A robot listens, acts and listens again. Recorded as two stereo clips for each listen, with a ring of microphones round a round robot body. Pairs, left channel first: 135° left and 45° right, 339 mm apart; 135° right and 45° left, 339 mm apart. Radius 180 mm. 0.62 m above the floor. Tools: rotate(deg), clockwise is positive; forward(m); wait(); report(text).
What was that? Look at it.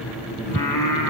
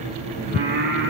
rotate(-105)
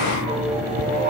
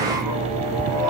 rotate(-20)
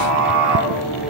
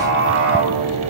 rotate(10)
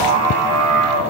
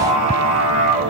report("Facing the singing.")